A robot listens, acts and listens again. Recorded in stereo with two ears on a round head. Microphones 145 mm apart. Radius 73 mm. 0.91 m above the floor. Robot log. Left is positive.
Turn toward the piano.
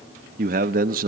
cmd idle
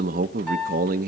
cmd yaw +30
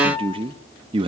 note: So it is at 150° left.
cmd yaw +150
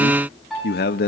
end: Found it: a piano, straight ahead.